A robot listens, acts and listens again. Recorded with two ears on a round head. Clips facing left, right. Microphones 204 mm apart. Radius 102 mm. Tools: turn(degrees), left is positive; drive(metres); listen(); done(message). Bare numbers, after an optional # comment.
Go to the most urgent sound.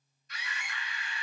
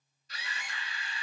# The scream: about 30° right or 150° right.
turn(-30)
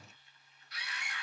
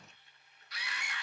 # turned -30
# So it is at 120° right.
turn(-120)
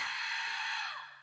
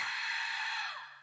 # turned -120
drive(1.0)
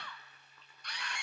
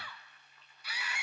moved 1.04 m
drive(1.0)
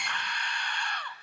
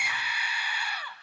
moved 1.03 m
drive(1.0)
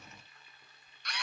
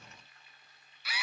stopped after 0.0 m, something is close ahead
done("Arrived at the scream, straight ahead.")